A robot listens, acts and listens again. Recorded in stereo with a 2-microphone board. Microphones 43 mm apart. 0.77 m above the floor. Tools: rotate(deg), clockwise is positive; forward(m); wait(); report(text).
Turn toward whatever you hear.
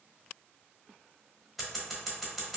rotate(-30)
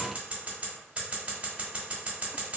rotate(30)
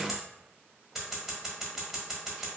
report("Facing the scissors.")